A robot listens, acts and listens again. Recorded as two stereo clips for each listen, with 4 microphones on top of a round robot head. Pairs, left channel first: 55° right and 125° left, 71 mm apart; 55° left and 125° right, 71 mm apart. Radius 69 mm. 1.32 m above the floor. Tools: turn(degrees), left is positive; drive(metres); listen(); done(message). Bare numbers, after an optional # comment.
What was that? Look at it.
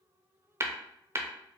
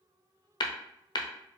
# The tapping: 75° left.
turn(75)
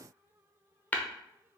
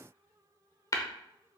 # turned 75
# The tapping is now 15° left.
turn(15)
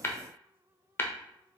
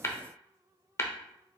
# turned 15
done("Found it: tapping, straight ahead, under 1 m away.")